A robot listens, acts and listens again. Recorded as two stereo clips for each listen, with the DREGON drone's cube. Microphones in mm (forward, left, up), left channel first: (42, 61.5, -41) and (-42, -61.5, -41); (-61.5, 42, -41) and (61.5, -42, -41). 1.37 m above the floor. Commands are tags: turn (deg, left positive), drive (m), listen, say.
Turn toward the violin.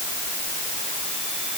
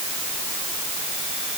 <listen/>
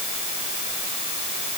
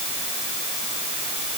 <listen/>
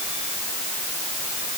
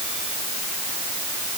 <say>I can't make out a violin to turn to.</say>